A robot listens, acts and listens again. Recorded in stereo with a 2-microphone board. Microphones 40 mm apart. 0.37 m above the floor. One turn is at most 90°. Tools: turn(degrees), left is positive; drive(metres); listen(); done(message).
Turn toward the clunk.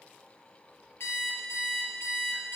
listen()
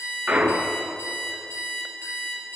turn(degrees=-30)
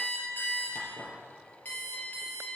listen()
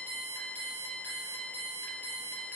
done("I heard a clunk, but can't make it out now. It was about straight ahead or 120° right.")